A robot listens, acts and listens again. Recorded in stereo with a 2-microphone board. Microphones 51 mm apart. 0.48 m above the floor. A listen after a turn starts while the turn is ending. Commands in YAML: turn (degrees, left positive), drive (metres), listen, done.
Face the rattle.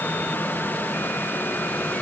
listen: true
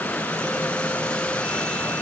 listen: true
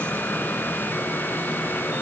done: "I can't make out a rattle."